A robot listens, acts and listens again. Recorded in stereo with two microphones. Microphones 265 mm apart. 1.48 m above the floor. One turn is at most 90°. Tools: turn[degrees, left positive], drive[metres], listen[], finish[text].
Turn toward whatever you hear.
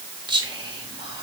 Thought: The whispering: about 15° right or 165° right.
Action: turn[-15]
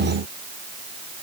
Action: listen[]
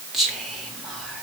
Action: finish[Facing the whispering.]